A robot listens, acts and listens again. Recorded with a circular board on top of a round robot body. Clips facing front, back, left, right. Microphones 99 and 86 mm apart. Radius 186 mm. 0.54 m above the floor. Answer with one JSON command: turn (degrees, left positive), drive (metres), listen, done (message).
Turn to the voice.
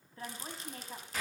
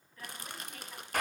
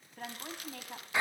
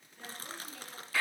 {"turn": 60}
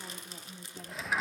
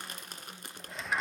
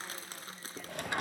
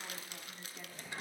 {"listen": true}
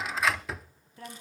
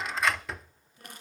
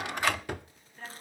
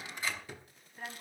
{"turn": -10}
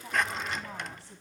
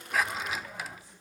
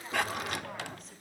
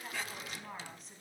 {"listen": true}
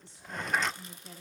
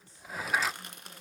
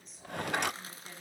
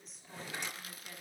{"done": "Found it: a woman speaking, straight ahead."}